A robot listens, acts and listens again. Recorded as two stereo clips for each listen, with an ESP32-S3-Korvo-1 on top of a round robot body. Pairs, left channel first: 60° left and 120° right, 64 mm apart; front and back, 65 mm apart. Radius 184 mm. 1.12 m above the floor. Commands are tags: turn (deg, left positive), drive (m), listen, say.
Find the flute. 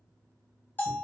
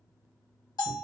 <listen/>
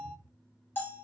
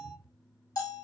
<listen/>
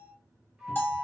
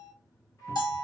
<turn deg="-40"/>
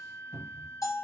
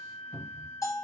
<turn deg="-15"/>
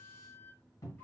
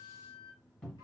<say>Found it: a flute, straight ahead.</say>